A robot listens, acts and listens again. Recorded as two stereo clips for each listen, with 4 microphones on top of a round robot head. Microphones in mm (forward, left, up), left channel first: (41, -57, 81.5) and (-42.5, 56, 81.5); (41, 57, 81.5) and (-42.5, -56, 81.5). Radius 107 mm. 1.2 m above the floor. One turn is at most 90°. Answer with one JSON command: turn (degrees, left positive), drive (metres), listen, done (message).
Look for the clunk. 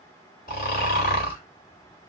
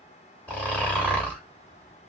{"listen": true}
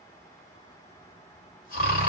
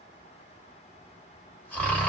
{"listen": true}
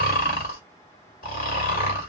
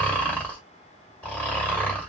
{"done": "I can't make out a clunk to turn to."}